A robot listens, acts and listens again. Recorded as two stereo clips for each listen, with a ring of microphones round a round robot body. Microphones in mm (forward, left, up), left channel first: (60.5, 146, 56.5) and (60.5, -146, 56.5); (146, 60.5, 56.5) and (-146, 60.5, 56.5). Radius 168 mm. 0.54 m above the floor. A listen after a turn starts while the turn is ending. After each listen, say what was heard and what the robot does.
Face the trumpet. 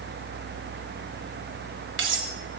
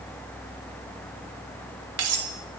Keep listening.
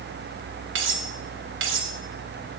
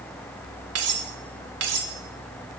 Keep listening.
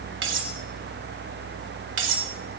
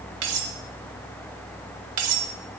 I can't make out a trumpet, only cutlery clinking.